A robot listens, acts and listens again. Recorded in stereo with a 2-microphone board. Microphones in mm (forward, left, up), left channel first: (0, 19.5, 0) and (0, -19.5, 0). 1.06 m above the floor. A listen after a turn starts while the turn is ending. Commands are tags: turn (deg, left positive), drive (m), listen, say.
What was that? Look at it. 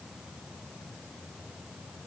<listen/>
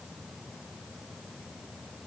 <listen/>
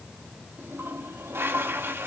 <turn deg="-75"/>
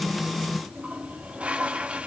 <turn deg="-30"/>
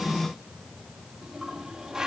<turn deg="-15"/>
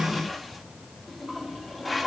<say>Facing the toilet flushing, 1 to 2 m away.</say>